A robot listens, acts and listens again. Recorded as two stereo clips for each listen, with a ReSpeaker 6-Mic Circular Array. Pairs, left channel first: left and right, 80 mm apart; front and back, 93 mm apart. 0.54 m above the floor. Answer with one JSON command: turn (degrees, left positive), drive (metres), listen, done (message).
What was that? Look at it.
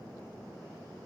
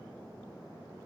{"listen": true}
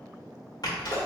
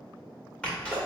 {"turn": 75}
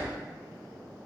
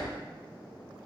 {"done": "Facing where the sneeze came from. I can't hear it now."}